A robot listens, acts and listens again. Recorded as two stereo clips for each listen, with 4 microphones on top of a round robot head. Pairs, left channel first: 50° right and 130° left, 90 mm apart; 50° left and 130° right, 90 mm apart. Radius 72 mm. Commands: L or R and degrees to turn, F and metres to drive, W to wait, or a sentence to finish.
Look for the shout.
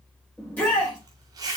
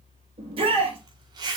R120
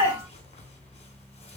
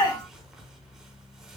L10
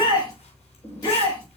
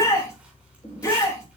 Facing the shout, over 4 m away.